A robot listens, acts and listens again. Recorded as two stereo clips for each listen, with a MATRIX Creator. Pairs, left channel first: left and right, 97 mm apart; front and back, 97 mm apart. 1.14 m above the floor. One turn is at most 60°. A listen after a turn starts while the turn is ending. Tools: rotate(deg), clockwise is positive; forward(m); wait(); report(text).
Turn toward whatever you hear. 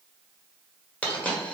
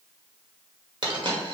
rotate(-60)
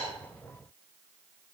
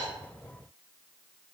rotate(-60)
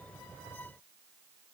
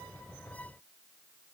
rotate(-45)
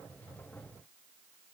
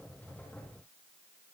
report("I heard a dropped coin from this way, but can't make it out now.")